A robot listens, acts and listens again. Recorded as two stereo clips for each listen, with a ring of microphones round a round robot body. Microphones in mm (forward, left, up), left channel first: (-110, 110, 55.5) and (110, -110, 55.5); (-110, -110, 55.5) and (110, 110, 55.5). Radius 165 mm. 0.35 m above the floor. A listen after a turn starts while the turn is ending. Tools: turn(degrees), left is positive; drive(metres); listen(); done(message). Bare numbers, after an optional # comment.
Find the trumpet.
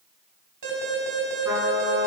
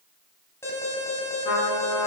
# The trumpet: 125° right.
turn(-125)
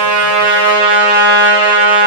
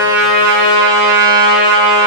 # The trumpet is now 25° left.
turn(25)
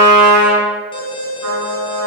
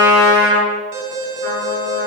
# The trumpet is now 10° right.
turn(-10)
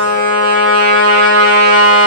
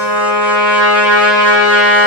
done("Found it: a trumpet, straight ahead, over 4 m away.")